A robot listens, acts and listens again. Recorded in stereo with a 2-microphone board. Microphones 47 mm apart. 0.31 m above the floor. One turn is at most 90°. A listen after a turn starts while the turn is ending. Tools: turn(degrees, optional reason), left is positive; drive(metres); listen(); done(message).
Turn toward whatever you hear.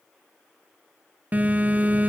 turn(degrees=-35, reason="The phone buzzing: about 35° right or 145° right.")
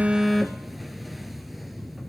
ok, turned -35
done("Facing the phone buzzing.")